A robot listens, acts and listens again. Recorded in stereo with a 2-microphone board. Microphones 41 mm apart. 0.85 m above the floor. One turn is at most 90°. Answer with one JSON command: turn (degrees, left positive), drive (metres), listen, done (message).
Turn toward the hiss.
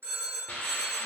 {"turn": 45}
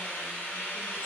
{"turn": 80}
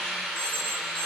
{"done": "Facing the hiss, under 1 m away."}